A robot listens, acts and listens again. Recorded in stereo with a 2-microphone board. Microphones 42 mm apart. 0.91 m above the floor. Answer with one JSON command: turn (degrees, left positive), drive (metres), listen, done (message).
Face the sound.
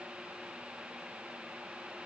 {"listen": true}
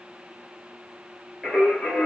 {"turn": 30}
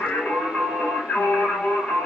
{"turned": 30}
{"turn": 135}
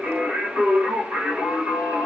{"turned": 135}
{"turn": -30}
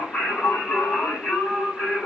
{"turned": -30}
{"turn": 20}
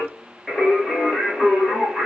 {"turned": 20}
{"done": "Facing the singing."}